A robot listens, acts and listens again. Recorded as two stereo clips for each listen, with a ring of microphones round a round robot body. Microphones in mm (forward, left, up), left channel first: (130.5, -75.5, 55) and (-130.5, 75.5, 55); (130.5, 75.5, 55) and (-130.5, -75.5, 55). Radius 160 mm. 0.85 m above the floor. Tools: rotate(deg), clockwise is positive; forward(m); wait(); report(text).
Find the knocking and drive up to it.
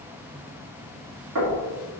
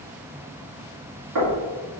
rotate(-180)
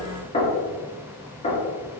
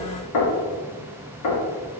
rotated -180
rotate(-40)
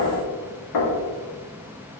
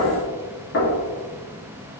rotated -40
rotate(20)
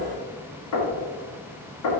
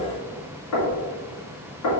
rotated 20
forward(1.0)
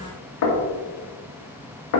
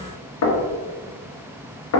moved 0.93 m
forward(1.0)
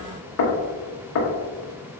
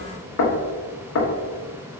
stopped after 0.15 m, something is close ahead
report("I am next to the knocking.")